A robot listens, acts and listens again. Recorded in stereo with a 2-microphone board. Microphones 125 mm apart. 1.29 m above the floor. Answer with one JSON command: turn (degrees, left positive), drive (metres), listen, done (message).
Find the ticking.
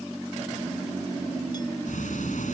{"turn": 90}
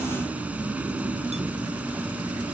{"turn": -10}
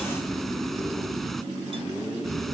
{"done": "Found it: ticking, straight ahead."}